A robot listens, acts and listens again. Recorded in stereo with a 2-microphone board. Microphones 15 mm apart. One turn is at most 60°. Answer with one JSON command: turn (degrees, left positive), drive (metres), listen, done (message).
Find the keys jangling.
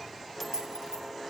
{"turn": -60}
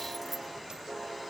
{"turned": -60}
{"listen": true}
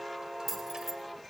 {"turn": -15}
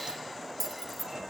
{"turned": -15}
{"done": "Found it: keys jangling, straight ahead, 2 to 4 m away."}